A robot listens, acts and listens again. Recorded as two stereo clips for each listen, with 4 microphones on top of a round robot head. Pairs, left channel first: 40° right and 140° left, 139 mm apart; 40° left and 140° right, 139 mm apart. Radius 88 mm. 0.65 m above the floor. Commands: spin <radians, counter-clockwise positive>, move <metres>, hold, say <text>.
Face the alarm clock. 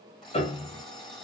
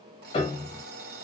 spin -2.18
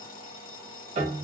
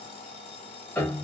spin -0.17
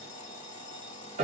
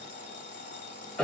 say Facing the alarm clock.